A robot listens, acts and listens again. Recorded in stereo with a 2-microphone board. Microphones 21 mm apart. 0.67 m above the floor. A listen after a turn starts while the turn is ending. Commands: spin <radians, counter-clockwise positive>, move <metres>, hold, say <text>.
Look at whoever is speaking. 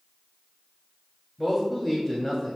spin 0.52
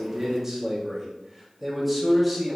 say Found it: a man speaking, straight ahead, 2 to 4 m away.